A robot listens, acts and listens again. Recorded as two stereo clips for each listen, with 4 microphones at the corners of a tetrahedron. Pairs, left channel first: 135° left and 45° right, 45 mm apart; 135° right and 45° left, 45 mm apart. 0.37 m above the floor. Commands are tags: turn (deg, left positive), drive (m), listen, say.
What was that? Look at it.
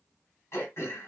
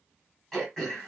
<turn deg="140"/>
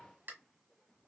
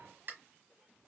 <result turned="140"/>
<say>Found it: throat clearing, straight ahead.</say>